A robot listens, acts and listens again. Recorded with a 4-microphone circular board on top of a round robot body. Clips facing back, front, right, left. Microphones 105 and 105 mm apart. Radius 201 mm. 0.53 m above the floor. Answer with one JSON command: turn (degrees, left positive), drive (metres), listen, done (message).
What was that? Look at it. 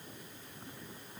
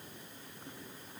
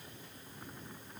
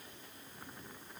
{"listen": true}
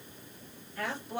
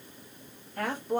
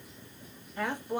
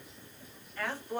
{"turn": -20}
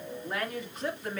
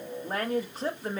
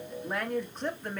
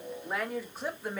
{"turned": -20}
{"turn": 20}
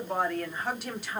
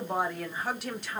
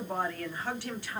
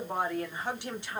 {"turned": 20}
{"turn": 110}
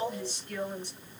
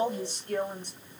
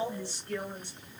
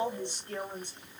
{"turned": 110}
{"turn": 30}
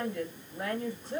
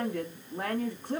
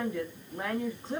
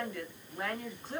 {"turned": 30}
{"turn": -15}
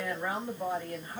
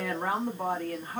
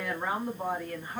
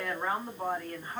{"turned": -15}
{"done": "Found it: a woman speaking, straight ahead, 1 to 2 m away."}